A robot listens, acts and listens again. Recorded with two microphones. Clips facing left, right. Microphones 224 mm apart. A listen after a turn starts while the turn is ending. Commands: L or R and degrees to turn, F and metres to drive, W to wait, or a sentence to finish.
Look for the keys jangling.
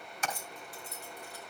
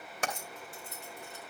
R25
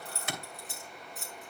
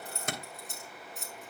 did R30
Facing the keys jangling.